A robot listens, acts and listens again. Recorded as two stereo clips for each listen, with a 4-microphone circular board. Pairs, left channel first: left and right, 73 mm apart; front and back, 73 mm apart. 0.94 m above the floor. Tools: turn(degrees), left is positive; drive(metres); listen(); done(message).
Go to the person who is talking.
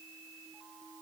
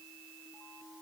listen()
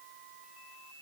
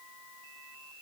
listen()
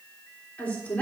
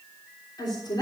turn(degrees=20)
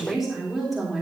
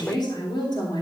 drive(metres=1.0)
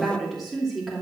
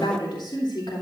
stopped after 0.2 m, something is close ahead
done("Blocked. The woman speaking is further on, straight ahead.")